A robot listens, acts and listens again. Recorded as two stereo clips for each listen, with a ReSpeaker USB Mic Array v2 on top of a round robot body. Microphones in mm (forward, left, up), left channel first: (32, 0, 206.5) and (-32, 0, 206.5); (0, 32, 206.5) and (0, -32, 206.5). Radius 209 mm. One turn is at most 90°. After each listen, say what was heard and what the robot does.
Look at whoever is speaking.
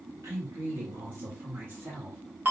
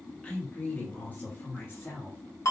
The woman speaking: 130° left. Turn 90° left.
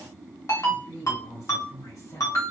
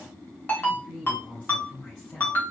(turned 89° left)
The woman speaking is now 15° left. Turn 15° left.
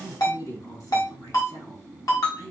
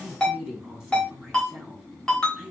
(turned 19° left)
Found it: a woman speaking, straight ahead, over 4 m away.